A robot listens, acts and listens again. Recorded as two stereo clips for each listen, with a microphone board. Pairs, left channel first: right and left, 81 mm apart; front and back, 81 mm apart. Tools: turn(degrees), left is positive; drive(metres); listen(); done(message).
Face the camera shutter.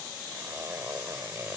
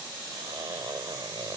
listen()
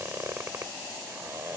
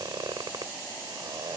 listen()
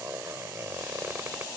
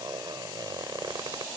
done("I can't make out a camera shutter to turn to.")